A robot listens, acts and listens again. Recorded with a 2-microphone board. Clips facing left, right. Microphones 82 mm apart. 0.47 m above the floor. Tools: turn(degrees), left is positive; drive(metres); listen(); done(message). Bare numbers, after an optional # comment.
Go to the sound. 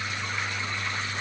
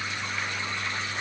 listen()
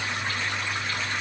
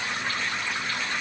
listen()
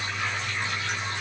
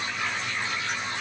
done("I can't make out anything to turn to.")